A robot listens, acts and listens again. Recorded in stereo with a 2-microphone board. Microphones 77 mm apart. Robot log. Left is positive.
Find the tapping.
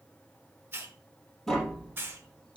cmd yaw +30
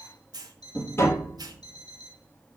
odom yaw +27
note: So it is at 145° left.
cmd yaw +145
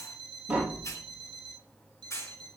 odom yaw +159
note: The tapping is now 15° right.
cmd yaw -15
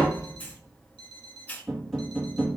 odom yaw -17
end: Found it: tapping, straight ahead, 2 to 4 m away.